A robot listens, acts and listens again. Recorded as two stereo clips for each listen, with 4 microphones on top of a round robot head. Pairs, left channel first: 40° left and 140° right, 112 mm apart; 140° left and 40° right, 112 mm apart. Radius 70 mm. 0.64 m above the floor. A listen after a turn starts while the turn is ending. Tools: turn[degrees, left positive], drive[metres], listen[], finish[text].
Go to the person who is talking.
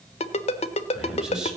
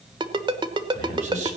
Thought: The man speaking: 55° right.
Action: turn[-55]
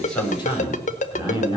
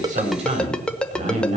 Thought: The man speaking is now 10° right.
Action: turn[-10]
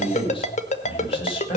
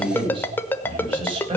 Action: drive[1.0]
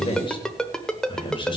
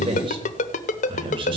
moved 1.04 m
Action: drive[1.0]
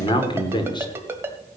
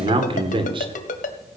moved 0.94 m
Action: drive[1.0]
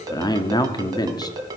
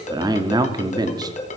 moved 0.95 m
Action: drive[1.0]
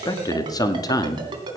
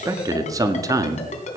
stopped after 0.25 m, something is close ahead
Action: finish[Arrived at the man speaking, straight ahead.]